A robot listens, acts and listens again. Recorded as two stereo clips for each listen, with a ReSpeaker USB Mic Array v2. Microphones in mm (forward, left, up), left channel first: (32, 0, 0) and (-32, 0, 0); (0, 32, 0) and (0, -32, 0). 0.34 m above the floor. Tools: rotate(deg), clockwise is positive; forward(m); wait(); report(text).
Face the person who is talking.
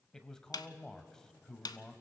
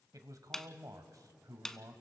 rotate(75)
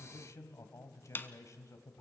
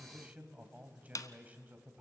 rotate(25)
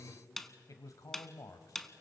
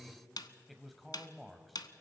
report("Facing the man speaking, 1 to 2 m away.")